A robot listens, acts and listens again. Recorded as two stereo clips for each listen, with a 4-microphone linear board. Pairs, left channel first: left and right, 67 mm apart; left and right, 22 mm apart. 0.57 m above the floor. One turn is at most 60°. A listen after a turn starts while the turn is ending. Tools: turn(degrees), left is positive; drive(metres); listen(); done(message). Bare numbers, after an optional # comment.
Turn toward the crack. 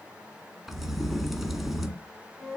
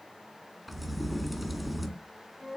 turn(30)
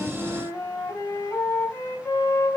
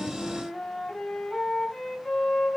listen()
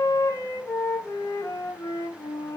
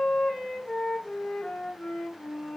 done("I heard a crack, but can't make it out now. It was about 30° right or 150° left.")